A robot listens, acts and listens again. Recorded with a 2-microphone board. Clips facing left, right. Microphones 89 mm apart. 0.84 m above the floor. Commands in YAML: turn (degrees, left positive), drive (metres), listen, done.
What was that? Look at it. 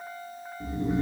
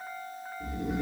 turn: 35
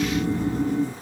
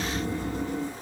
turn: 105
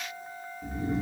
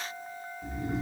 done: "Facing the snoring."